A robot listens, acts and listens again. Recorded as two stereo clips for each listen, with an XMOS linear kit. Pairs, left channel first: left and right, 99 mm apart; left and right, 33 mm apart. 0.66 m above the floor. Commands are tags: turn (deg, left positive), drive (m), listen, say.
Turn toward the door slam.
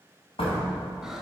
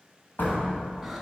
<turn deg="90"/>
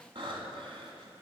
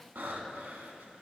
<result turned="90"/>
<say>Facing where the door slam came from. I can't hear it now.</say>